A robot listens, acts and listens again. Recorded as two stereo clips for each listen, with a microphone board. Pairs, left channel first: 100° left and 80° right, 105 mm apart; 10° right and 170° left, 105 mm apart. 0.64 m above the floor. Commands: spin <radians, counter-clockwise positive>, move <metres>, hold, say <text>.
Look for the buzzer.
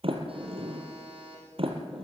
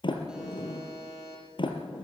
spin -1.92
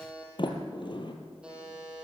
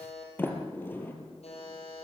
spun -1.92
say Found it: a buzzer, straight ahead.